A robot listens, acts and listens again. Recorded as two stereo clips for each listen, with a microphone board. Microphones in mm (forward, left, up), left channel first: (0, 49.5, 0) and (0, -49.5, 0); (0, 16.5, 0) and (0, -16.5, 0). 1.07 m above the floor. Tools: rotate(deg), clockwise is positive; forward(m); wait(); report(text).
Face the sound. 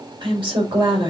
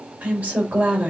rotate(50)
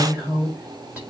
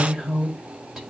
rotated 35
rotate(15)
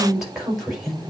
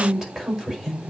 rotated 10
report("Facing the woman speaking, over 4 m away.")